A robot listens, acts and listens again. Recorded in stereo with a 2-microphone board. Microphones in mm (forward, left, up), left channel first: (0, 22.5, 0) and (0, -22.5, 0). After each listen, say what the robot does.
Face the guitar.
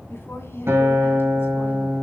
Turn 65° right.
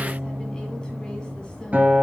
Turn 40° right.
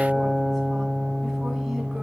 Turn 15° right.
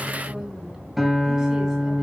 Found it: a guitar, straight ahead.